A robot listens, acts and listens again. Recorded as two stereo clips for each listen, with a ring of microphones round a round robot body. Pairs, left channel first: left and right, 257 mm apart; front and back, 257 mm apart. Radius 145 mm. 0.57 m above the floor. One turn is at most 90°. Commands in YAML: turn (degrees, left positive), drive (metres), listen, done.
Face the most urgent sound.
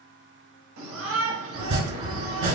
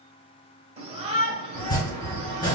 turn: -90
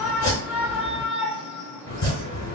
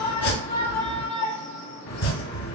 done: "Found it: a shout, straight ahead, 1 to 2 m away."